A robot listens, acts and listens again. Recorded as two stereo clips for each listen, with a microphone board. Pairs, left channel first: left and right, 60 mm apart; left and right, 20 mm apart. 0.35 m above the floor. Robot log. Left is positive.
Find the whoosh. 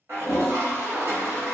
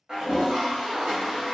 cmd idle
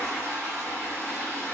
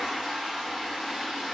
cmd idle
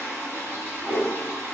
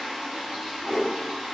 cmd yaw -30
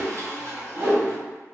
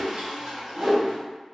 note: So it is at 135° right.
cmd yaw -135
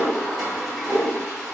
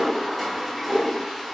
note: The whoosh is now 40° right.
cmd yaw -40
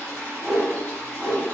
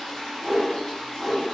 note: The whoosh is now 10° right.
cmd yaw -10
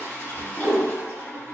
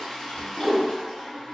end: Found it: a whoosh, straight ahead.